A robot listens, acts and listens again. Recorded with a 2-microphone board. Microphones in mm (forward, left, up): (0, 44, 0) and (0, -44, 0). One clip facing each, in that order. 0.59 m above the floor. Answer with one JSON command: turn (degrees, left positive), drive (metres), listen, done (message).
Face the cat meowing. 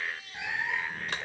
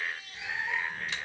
{"turn": 55}
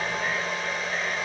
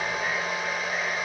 {"listen": true}
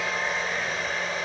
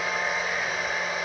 {"listen": true}
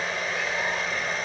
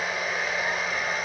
{"done": "I heard a cat meowing, but can't make it out now. It was about straight ahead or 70° left."}